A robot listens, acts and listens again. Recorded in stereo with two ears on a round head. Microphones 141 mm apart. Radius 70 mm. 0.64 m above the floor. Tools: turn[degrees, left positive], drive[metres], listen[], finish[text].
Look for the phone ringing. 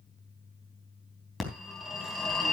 Action: turn[30]
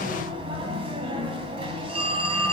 Thought: So it is at 35° right.
Action: turn[-35]
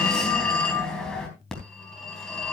Action: finish[Found it: a phone ringing, straight ahead.]